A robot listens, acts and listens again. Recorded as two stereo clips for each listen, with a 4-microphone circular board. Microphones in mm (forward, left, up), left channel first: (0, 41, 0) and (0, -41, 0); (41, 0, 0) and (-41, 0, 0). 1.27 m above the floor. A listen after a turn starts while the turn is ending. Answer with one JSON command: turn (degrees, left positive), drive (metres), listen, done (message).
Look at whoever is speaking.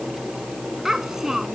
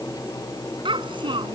{"turn": -175}
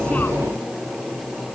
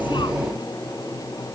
{"listen": true}
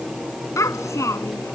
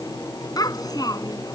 {"turn": 35}
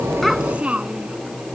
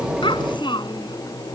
{"turn": -15}
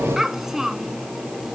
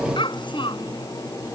{"done": "Facing the child speaking."}